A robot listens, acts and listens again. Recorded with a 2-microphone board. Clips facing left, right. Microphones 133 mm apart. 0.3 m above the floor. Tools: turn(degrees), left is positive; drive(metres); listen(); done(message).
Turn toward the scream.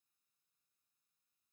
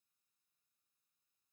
listen()
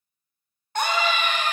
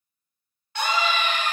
turn(degrees=45)
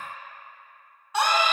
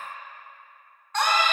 turn(degrees=10)
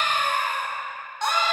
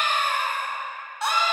done("Facing the scream, 1 to 2 m away.")